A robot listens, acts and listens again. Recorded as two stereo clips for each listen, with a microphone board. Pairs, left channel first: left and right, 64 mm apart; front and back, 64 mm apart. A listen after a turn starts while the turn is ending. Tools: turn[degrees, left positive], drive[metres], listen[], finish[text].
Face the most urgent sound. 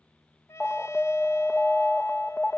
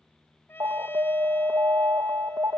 Thought: The alarm: 165° left.
Action: turn[165]
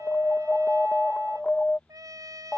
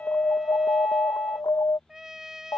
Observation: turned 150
Thought: The alarm is now 15° left.
Action: turn[15]
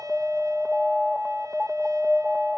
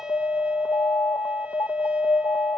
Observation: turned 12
Action: finish[Facing the alarm.]